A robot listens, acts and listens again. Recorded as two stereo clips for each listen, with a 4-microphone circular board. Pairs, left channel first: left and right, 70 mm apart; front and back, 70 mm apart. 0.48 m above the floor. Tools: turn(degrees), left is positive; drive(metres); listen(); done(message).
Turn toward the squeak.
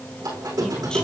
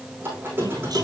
turn(degrees=-125)
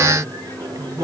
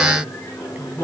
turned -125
turn(degrees=-55)
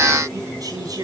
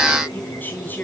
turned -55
listen()
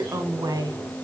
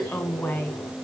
listen()
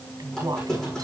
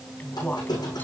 done("Facing the squeak, over 4 m away.")